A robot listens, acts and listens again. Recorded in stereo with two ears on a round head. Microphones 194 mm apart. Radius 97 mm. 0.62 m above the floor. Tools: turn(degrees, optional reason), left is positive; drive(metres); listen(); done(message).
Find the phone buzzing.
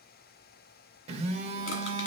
turn(degrees=-30, reason="The phone buzzing: about 30° right or 150° right.")
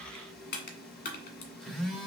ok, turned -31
done("Found it: a phone buzzing, straight ahead, 1 to 2 m away.")